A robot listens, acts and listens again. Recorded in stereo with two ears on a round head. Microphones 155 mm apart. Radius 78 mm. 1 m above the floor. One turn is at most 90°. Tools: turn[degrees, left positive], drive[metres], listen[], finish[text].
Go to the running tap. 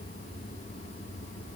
Action: listen[]
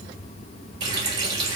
Thought: The running tap: about 25° right or 155° right.
Action: turn[-25]
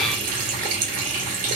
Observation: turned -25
Thought: So it is at 130° right.
Action: turn[-90]
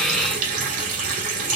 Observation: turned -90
Thought: The running tap is now 60° right.
Action: turn[-60]
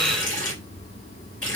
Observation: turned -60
Action: drive[1.0]
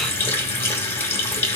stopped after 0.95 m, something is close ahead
Thought: The running tap is now 15° left.
Action: turn[15]
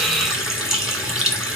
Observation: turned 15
Action: finish[I am next to the running tap.]